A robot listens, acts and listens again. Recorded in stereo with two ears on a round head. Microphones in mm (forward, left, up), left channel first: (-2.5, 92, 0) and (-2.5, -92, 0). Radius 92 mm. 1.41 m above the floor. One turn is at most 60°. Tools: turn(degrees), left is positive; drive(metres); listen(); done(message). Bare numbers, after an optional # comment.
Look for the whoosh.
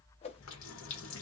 # The whoosh: about 30° left or 150° left.
turn(30)
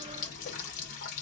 listen()
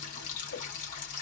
listen()
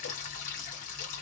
done("I heard a whoosh, but can't make it out now. It was about straight ahead or 120° left.")